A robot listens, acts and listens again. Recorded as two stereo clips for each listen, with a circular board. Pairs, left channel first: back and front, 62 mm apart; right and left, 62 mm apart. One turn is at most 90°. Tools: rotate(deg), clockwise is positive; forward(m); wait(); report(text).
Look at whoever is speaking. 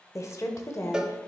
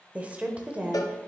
rotate(-90)
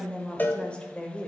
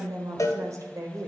rotate(-90)
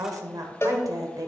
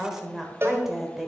report("Found it: a woman speaking, straight ahead.")